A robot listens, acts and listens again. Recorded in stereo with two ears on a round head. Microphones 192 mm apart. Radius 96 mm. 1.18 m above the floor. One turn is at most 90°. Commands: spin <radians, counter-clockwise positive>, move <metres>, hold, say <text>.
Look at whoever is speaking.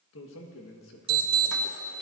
spin 1.13
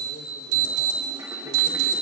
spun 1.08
hold
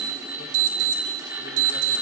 hold
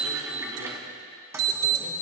say I heard a man speaking, but can't make it out now. It was about straight ahead or 55° left.